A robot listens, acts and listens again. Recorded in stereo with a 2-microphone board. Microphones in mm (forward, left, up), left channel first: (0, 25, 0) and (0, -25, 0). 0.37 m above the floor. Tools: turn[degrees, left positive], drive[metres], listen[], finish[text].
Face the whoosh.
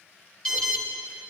Action: listen[]
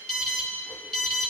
Action: listen[]
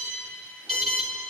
Action: finish[I can't make out a whoosh, only an alarm.]